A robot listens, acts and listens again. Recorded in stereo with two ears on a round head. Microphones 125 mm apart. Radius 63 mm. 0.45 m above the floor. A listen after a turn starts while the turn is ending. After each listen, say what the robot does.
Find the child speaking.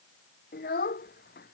Turn 70° left.
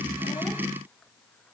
Keep listening.
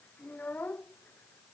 Turn 10° left.
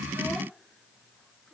Keep listening.
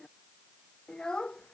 Facing the child speaking.